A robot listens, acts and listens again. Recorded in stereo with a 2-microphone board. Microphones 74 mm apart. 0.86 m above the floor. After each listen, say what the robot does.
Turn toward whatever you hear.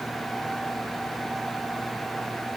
Keep listening.
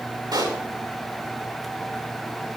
Turn 70° right.
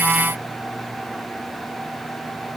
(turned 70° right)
Keep listening.
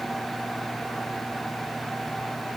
I heard a pop, but can't make it out now. It was about straight ahead or 40° right.